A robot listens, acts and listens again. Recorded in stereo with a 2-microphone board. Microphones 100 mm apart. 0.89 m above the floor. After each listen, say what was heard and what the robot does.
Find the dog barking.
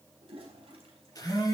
Keep listening.
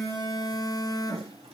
Keep listening.
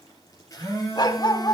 The dog barking: about 45° left or 135° left. Turn 45° left.
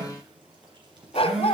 So it is at 85° left. Turn 85° left.
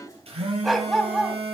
Facing the dog barking.